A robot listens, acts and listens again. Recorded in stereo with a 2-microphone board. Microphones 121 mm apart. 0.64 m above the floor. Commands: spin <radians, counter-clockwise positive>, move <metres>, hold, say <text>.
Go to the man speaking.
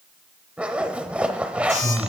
spin -1.57
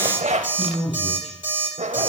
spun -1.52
move 1.0
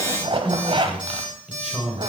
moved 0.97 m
move 1.0
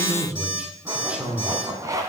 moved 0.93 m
spin -0.17
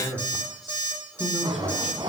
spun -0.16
move 1.0
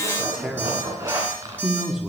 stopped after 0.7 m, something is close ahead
say I am next to the man speaking.